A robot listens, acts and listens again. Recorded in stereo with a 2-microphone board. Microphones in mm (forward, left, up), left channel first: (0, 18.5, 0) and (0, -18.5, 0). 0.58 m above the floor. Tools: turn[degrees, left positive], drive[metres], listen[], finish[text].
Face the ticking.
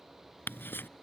Thought: The ticking: about 70° left or 110° left.
Action: turn[70]
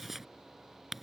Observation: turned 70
Action: finish[Found it: ticking, straight ahead.]